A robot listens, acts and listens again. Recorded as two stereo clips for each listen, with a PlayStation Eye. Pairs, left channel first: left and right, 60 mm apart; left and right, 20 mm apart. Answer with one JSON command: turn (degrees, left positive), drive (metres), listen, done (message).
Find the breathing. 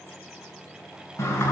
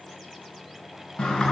{"listen": true}
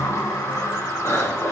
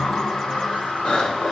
{"turn": 60}
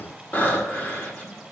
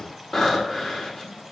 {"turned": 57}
{"turn": 35}
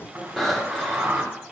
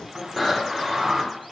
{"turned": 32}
{"done": "Facing the breathing."}